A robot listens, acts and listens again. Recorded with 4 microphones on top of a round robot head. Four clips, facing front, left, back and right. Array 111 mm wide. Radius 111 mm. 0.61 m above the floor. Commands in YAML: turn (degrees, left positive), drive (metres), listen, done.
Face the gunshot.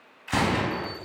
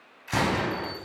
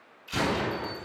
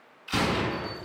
turn: 30
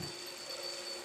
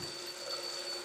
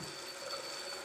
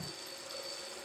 done: "Facing where the gunshot came from. I can't hear it now."